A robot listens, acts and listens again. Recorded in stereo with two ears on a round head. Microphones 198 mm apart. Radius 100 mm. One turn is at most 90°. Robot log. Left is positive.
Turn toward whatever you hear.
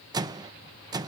note: The microwave: about 20° right or 160° right.
cmd yaw -20
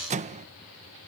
note: So it is at 140° right.
cmd yaw -90
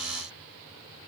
note: Nothing new. It was at 50° right.
cmd yaw -50
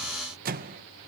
note: The microwave is now 50° right.
cmd yaw -50
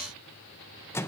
note: The microwave is now 15° left.
cmd yaw +15
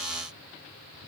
cmd idle
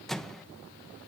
end: Facing the microwave.